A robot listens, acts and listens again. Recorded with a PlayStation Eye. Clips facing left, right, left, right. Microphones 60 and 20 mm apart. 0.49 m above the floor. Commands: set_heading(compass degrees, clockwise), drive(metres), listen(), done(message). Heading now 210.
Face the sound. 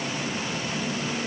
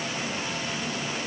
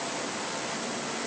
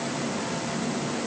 listen()
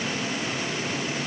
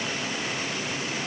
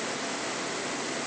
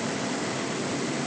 listen()
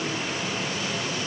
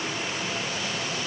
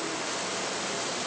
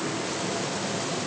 done("I can't make out anything to turn to.")